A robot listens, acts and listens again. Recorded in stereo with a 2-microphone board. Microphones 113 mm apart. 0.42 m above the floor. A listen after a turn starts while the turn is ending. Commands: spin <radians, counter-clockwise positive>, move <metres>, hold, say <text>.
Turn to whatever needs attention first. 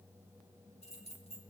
hold
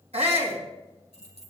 spin -1.22
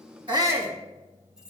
spin -0.44
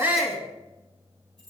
say Facing the shout.